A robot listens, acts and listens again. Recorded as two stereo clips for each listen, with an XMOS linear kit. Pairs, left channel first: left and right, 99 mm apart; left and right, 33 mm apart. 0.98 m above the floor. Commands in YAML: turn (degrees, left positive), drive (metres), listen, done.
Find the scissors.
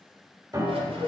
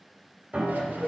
turn: -90
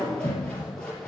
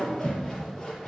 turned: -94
turn: 10
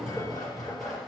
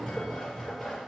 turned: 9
done: "Facing the scissors."